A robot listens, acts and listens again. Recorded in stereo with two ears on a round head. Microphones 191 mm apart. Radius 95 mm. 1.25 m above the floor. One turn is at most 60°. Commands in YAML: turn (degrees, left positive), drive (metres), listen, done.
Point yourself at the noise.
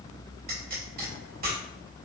turn: -45
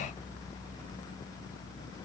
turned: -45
listen: true
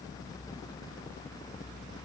done: "I heard a pop, but can't make it out now. It was about straight ahead or 90° right."